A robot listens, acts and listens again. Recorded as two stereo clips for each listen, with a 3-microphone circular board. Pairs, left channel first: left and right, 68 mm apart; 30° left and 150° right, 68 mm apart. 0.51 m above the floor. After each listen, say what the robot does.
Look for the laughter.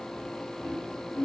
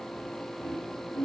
Turn 20° left.
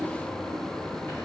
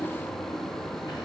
Keep listening.
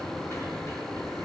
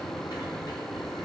Keep listening.
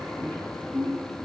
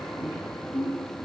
Turn 35° left.
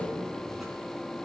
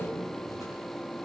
Keep listening.
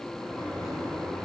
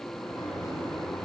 Keep listening.
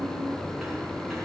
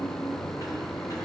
Facing where the laughter came from. I can't hear it now.